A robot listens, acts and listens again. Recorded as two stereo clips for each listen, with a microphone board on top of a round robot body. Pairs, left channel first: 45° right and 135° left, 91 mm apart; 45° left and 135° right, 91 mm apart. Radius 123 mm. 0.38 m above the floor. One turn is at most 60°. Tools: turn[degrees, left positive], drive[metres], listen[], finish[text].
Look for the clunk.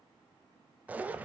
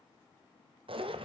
Action: listen[]
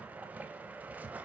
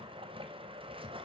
Action: listen[]
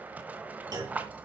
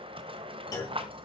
Thought: The clunk: 90° left.
Action: turn[60]
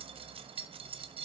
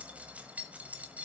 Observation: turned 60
Thought: Nothing new. It was at 30° left.
Action: turn[30]
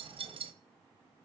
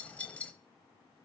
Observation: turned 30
Action: finish[Facing where the clunk came from. I can't hear it now.]